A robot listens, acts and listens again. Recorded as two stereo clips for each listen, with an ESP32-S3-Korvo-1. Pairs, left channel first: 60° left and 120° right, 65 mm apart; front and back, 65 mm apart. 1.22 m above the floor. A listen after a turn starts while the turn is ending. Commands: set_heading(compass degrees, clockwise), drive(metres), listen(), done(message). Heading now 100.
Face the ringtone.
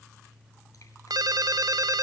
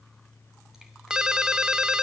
set_heading(200)
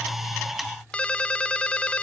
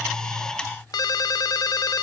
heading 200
set_heading(210)
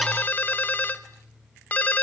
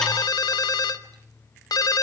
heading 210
done("Found it: a ringtone, straight ahead, 1 to 2 m away.")